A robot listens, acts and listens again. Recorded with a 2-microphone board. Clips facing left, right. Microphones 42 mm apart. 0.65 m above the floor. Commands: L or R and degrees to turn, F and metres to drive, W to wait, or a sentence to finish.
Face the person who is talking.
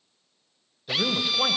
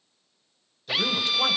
L30
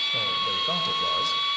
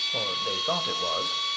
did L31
R20
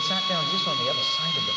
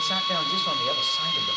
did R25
Facing the man speaking.